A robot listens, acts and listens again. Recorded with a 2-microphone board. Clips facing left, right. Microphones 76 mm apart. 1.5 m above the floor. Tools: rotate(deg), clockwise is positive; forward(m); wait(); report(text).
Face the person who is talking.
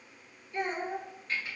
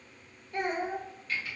rotate(60)
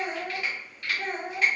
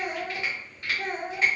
report("Facing the child speaking, under 1 m away.")